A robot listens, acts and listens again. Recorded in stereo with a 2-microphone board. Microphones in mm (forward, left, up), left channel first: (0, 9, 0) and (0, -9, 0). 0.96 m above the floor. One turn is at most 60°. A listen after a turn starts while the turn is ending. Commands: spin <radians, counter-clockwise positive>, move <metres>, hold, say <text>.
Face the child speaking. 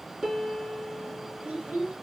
spin -1.05
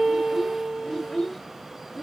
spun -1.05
say Facing the child speaking.